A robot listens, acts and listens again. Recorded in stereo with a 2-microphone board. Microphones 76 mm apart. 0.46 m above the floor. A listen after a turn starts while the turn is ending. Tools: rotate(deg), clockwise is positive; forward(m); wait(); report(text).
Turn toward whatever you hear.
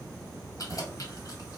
rotate(-45)
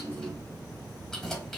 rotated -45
rotate(-10)
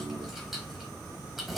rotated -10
report("Facing the keys jangling.")